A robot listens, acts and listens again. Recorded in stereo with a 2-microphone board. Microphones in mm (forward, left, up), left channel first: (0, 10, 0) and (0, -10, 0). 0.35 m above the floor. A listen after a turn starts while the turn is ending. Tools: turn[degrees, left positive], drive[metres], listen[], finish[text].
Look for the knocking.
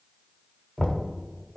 Thought: The knocking: about 45° left or 135° left.
Action: turn[45]
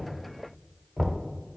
Thought: So it is at 10° left.
Action: turn[10]
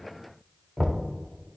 Action: finish[Found it: knocking, straight ahead, 1 to 2 m away.]